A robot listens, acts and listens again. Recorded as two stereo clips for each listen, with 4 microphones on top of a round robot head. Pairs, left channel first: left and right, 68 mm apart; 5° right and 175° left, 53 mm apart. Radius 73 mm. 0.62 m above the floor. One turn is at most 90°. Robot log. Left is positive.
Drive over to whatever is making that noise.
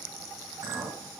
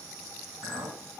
note: The clink: 145° right.
cmd yaw -90
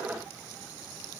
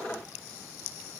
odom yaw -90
note: Nothing new. It was at 55° right.
cmd yaw -55
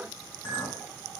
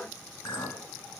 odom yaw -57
cmd fwd 1.0
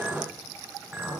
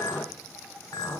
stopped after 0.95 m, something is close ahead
end: Arrived at the clink, straight ahead.